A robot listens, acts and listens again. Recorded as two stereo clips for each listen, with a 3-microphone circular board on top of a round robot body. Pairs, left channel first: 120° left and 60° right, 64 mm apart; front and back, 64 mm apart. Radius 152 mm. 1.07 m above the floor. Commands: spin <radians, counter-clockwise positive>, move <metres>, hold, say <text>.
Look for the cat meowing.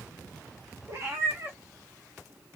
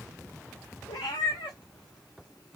say Found it: a cat meowing, straight ahead, 1 to 2 m away.